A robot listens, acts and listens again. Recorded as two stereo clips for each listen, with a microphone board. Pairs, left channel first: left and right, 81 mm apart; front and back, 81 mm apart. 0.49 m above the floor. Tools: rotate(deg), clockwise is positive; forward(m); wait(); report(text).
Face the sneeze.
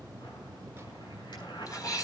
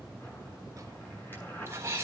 rotate(-130)
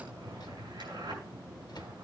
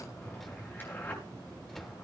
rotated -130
report("Facing where the sneeze came from. I can't hear it now.")